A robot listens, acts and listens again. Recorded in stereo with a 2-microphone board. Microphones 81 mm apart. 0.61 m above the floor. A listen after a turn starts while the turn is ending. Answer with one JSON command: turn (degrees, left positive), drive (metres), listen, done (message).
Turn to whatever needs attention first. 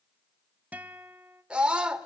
{"turn": -30}
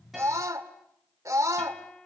{"turn": -135}
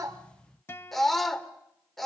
{"done": "Facing the scream, 1 to 2 m away."}